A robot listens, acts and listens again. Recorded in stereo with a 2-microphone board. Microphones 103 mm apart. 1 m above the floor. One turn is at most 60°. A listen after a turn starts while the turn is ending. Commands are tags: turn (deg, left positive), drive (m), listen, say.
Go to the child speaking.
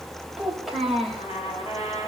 <turn deg="-30"/>
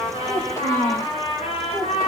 <turn deg="30"/>
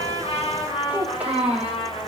<turn deg="-15"/>
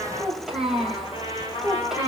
<drive m="1.0"/>
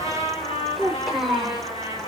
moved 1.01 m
<drive m="1.0"/>
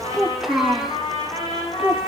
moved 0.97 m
<drive m="1.0"/>
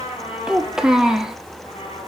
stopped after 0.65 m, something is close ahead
<say>Arrived at the child speaking, straight ahead.</say>